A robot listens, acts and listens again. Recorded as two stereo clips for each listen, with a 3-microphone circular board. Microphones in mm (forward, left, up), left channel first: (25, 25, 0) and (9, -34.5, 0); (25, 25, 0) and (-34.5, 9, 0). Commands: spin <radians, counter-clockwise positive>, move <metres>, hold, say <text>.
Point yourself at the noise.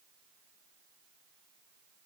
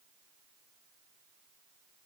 hold
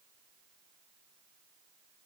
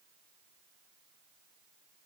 hold
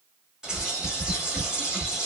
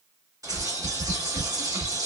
spin 3.05
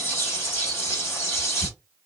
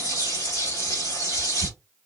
spin 0.44
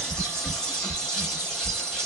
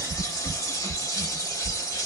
say Found it: a bird, straight ahead, 1 to 2 m away.